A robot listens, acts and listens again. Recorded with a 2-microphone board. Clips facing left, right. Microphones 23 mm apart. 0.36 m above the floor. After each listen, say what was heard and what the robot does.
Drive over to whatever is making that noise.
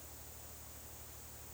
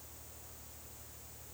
Keep listening.
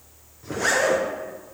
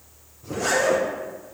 Turn 90° left.
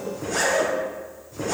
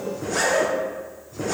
Drive 1.0 m forward.
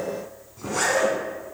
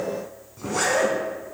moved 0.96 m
Drive 1.0 m forward.
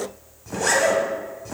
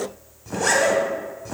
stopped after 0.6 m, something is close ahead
Arrived at the zipper, straight ahead.